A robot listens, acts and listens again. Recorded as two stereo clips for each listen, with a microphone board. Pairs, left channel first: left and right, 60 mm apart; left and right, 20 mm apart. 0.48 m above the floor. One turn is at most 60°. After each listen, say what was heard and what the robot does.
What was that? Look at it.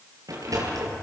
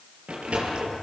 Turn 60° right.
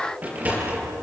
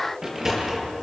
So it is at 30° right. Turn 30° right.
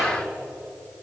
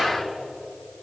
Keep listening.
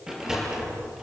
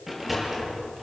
The sliding door is now 10° right. Turn 10° right.
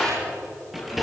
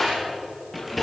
Facing the sliding door, over 4 m away.